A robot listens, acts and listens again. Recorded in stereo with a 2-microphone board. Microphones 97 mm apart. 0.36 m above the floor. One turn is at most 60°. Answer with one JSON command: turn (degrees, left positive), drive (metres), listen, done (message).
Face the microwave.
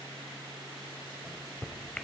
{"turn": 30}
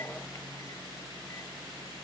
{"listen": true}
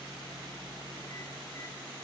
{"listen": true}
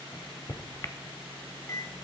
{"turn": 60}
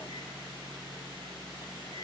{"turn": 60}
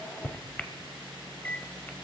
{"turn": 20}
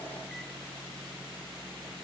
{"listen": true}
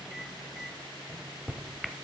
{"done": "Facing the microwave."}